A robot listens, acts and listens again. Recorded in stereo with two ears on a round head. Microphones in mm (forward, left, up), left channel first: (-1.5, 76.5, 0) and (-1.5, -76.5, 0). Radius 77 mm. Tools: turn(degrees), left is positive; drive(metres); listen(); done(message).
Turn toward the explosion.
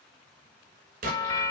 turn(degrees=-50)
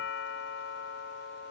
listen()
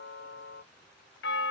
done("I heard an explosion, but can't make it out now. It was about straight ahead or 80° right.")